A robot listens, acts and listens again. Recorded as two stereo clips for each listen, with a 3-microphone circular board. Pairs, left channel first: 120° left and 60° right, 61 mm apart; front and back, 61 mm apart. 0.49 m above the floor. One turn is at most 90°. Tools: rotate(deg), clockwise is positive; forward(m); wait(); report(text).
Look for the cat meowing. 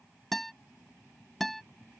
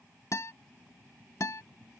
wait()
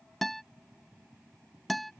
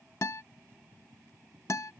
wait()
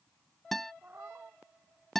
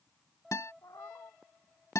report("Facing the cat meowing.")